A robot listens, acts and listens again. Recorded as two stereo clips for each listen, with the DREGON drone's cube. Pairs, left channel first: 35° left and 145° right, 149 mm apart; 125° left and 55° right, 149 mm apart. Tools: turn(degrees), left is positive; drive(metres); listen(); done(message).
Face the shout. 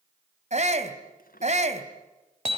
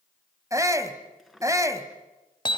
turn(degrees=-120)
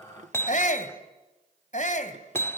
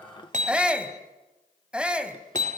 turn(degrees=25)
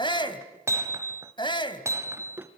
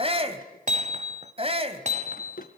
turn(degrees=-15)
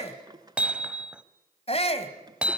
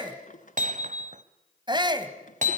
done("Facing the shout, 2 to 4 m away.")